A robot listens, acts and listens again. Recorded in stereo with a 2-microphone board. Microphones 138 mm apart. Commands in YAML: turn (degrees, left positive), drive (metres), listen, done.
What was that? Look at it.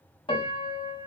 turn: 40
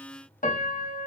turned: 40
turn: 95
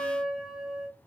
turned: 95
done: "Facing the piano, under 1 m away."